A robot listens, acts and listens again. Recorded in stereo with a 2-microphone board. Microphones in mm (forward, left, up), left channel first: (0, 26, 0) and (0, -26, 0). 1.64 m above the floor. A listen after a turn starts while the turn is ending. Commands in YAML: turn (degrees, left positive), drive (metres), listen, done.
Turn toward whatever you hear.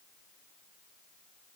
listen: true
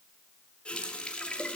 turn: 20
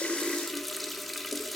done: "Facing the running tap."